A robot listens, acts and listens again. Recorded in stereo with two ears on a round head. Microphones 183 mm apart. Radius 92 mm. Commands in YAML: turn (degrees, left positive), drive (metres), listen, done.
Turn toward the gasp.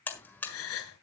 turn: 90
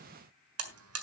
done: "Facing where the gasp came from. I can't hear it now."